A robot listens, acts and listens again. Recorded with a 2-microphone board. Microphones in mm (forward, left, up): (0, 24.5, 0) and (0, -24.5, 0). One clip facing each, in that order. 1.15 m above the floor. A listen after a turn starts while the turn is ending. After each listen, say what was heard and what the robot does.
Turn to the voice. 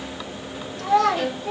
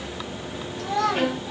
The child speaking: about 75° left or 105° left. Turn 75° left.
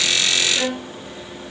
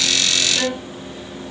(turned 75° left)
Keep listening.
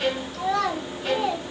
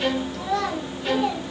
Found it: a child speaking, straight ahead.